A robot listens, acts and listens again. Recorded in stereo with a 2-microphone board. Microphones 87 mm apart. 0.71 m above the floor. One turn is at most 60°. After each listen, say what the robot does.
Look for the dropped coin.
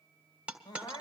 Turn 30° right.
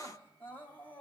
Keep listening.
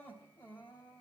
I heard a dropped coin, but can't make it out now. It was about 15° left or 135° right.